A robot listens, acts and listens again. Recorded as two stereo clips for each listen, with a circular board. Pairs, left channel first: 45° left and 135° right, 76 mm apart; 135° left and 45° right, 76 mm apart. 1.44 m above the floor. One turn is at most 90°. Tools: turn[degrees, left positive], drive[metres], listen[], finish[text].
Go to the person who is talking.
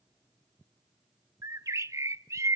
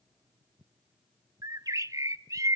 Action: listen[]
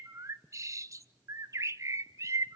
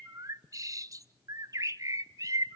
Action: listen[]
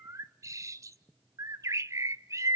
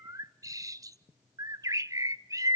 Action: finish[I can't make out anyone speaking to turn to.]